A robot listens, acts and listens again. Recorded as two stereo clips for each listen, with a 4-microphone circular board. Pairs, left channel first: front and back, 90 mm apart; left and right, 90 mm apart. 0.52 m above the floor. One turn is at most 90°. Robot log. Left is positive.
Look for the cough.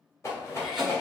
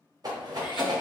note: The cough: 90° left.
cmd yaw +90
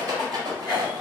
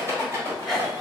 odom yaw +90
end: Facing the cough, 1 to 2 m away.